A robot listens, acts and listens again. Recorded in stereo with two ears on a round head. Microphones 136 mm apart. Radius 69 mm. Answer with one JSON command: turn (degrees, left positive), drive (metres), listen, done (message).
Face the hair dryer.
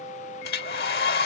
{"turn": 65}
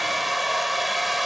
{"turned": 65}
{"done": "Facing the hair dryer."}